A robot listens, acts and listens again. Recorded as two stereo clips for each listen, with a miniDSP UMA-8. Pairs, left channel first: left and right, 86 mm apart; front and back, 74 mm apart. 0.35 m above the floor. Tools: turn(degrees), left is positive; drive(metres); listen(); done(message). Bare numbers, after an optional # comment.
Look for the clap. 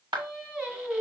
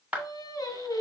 # The clap: 110° right.
turn(-110)
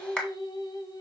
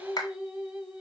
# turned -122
# The clap is now 15° left.
turn(15)
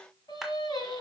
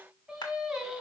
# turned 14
done("Found it: a clap, straight ahead.")